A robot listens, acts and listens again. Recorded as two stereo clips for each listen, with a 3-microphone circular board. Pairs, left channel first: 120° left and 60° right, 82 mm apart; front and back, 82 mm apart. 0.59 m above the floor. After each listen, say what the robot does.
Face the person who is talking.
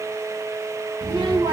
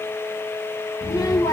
Turn 40° right.
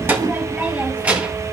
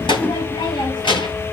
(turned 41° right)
Turn 15° left.
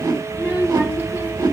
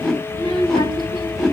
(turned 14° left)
Turn 10° left.
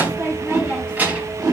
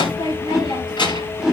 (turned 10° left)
Turn 15° left.
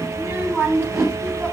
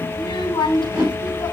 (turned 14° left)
Found it: a child speaking, straight ahead.